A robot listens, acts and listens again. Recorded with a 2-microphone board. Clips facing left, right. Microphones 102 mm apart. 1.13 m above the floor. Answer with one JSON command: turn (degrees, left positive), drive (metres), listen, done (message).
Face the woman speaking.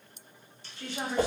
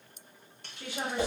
{"turn": -30}
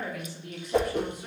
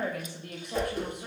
{"turn": -120}
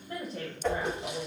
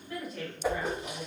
{"turn": 50}
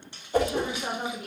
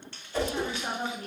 {"turn": 10}
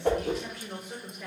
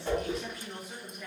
{"done": "Found it: a woman speaking, straight ahead, 2 to 4 m away."}